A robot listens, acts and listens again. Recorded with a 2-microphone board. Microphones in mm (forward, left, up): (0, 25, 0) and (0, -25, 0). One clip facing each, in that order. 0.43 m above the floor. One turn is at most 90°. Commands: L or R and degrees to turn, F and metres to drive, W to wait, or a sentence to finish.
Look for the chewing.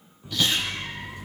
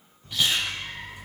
R20
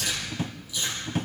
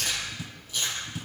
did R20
R90
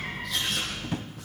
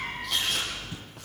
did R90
R75
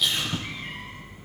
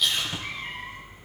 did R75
Found it: chewing, straight ahead.